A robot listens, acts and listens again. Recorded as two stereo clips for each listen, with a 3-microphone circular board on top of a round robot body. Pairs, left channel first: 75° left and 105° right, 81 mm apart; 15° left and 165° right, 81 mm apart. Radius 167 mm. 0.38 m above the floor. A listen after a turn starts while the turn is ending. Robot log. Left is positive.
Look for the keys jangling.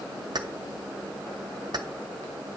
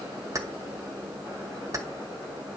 note: The keys jangling: 120° right.
cmd yaw -120
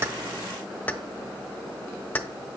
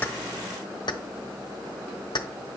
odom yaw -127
end: Found it: keys jangling, straight ahead.